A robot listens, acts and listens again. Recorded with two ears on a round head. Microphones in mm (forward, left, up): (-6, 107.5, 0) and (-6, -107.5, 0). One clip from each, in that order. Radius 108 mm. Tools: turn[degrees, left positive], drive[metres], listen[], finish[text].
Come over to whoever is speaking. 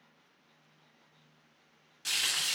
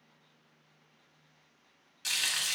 Action: listen[]
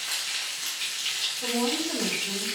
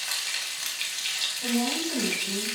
Thought: The woman speaking: about 20° left or 160° left.
Action: turn[20]
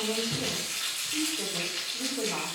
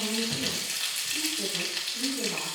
Action: listen[]
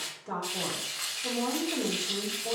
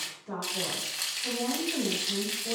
Thought: So it is at 135° left.
Action: turn[135]
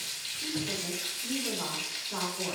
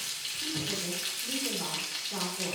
Thought: The woman speaking is now 25° left.
Action: turn[25]
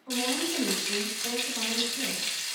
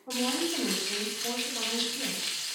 Thought: The woman speaking is now 10° right.
Action: turn[-10]
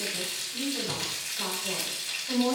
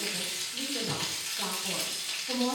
Action: drive[1.0]
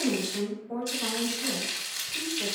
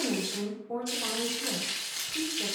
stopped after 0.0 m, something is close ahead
Action: finish[Blocked. The woman speaking is further on, straight ahead.]